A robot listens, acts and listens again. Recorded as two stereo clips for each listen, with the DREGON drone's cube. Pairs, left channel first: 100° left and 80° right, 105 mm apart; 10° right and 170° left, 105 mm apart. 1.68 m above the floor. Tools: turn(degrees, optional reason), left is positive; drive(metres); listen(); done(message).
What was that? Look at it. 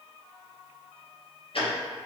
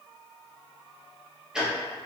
turn(degrees=90, reason="The ticking: 90° left.")
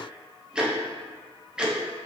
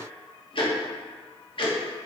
done("Facing the ticking, under 1 m away.")